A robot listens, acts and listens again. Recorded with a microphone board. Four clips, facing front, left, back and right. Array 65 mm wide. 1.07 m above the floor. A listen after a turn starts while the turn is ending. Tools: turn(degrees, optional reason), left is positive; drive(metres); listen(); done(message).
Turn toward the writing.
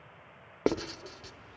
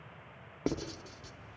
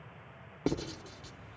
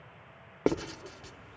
turn(degrees=-45, reason="The writing: 45° right.")
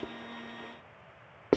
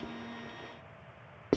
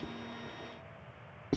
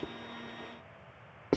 done("Facing the writing, under 1 m away.")